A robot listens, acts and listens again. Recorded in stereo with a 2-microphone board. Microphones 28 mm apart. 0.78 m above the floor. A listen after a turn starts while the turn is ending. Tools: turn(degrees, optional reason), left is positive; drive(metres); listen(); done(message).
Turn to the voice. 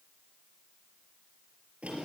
listen()
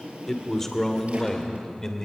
turn(degrees=20, reason="The man speaking: about 20° left or 160° left.")
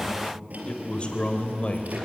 turn(degrees=135, reason="So it is at 135° left.")
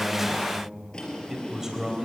turn(degrees=-15, reason="The man speaking is now 15° right.")
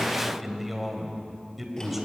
done("Facing the man speaking.")